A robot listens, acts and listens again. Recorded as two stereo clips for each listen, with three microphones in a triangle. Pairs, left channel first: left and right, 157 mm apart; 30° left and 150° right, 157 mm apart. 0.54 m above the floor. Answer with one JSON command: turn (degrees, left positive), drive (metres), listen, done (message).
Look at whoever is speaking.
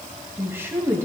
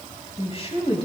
{"turn": -15}
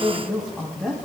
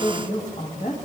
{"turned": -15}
{"done": "Found it: a woman speaking, straight ahead, over 4 m away."}